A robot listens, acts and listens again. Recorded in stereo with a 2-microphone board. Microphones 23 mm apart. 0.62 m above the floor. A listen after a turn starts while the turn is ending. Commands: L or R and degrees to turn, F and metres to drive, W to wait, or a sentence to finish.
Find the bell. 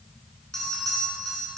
L25
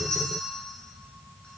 W
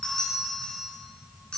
L130
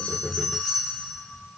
R20
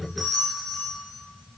Found it: a bell, straight ahead, 2 to 4 m away.